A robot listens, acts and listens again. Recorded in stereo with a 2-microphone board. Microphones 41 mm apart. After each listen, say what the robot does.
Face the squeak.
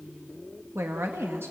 Keep listening.
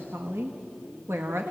Keep listening.
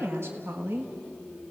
I can't make out a squeak to turn to.